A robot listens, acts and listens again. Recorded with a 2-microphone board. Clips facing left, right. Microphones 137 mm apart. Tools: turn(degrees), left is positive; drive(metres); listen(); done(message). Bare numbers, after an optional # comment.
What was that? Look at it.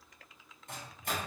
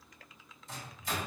# The microwave: about 55° left or 125° left.
turn(55)
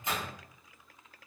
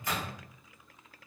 # So it is at 25° left.
turn(25)
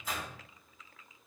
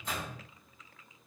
done("Found it: a microwave, straight ahead.")